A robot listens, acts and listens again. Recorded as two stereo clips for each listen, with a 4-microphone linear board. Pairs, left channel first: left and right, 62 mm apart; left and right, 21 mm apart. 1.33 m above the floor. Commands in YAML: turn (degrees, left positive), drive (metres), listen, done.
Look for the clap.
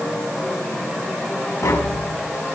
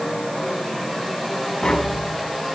listen: true
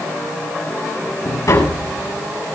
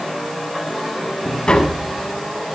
listen: true
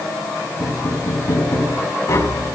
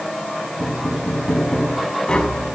done: "I can't make out a clap to turn to."